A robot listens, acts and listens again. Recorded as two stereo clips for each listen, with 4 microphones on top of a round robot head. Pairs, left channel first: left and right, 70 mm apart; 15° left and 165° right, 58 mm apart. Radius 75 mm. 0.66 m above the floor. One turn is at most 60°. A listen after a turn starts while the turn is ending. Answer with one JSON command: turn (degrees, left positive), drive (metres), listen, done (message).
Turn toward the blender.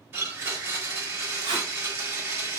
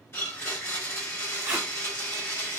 {"turn": -30}
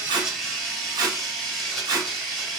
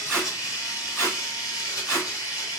{"turn": 10}
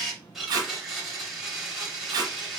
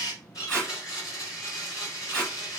{"done": "Facing the blender, 2 to 4 m away."}